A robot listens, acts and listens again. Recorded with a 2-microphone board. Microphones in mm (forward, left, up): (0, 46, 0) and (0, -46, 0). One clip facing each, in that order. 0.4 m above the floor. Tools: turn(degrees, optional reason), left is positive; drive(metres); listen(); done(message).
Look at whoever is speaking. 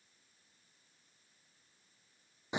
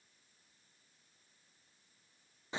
listen()
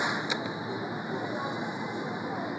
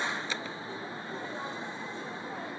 listen()
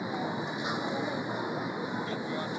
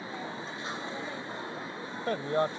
turn(degrees=-60, reason="The man speaking: about 60° right or 120° right.")
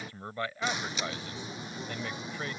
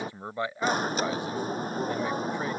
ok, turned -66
turn(degrees=-25, reason="So it is at 25° right.")
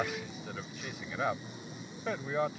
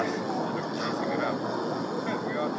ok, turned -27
done("Found it: a man speaking, straight ahead.")